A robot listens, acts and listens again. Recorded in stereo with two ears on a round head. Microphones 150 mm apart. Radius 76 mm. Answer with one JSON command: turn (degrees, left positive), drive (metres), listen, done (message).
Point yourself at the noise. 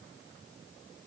{"listen": true}
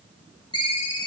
{"turn": 25}
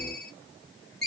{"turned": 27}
{"done": "Facing the ringtone."}